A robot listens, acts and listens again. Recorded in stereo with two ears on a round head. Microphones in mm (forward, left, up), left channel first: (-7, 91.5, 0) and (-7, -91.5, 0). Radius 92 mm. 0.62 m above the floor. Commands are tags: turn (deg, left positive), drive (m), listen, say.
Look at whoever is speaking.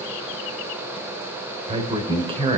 <turn deg="-25"/>
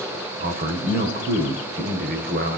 <turn deg="-130"/>
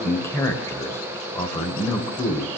<turn deg="15"/>
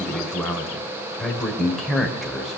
<say>Facing the man speaking, 2 to 4 m away.</say>